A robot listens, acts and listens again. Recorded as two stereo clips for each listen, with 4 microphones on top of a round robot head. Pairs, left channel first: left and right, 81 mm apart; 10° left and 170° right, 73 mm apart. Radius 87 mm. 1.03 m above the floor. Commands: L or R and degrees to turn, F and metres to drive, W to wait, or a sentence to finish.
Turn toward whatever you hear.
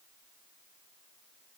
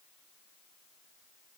W
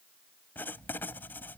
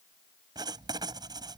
L160
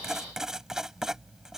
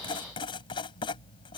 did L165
Found it: writing, straight ahead.